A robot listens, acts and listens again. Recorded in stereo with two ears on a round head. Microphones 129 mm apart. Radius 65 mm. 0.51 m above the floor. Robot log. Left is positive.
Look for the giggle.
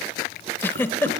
cmd yaw +30
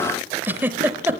note: So it is at 15° right.
cmd yaw -15
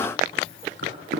cmd idle
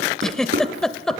end: Facing the giggle.